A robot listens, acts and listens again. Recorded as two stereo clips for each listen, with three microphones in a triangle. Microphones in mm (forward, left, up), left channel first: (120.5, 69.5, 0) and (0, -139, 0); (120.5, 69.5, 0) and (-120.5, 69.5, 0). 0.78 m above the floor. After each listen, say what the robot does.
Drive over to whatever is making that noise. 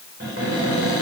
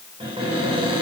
Turn 115° right.
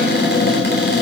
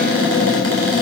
Turn 15° left.
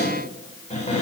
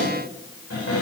Drive 1.0 m forward.
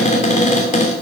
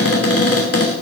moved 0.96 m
Drive 1.0 m forward.
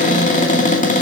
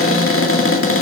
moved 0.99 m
Drive 1.0 m forward.
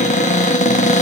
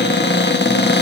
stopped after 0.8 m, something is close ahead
Turn 15° left.
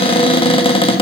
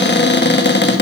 I am next to the cupboard door.